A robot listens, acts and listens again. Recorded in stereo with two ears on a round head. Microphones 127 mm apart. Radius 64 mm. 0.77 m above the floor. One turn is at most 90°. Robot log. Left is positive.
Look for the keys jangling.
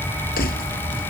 cmd yaw +90
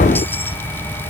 cmd idle
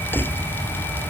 note: The keys jangling is now 15° left.
cmd yaw +15
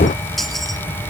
cmd idle
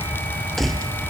end: Found it: keys jangling, straight ahead.